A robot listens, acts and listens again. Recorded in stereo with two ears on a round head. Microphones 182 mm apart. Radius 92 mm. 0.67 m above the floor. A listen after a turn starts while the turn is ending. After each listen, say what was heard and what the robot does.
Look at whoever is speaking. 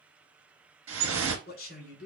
The man speaking: about 45° left or 135° left. Turn 45° left.
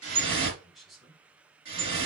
Facing the man speaking, 2 to 4 m away.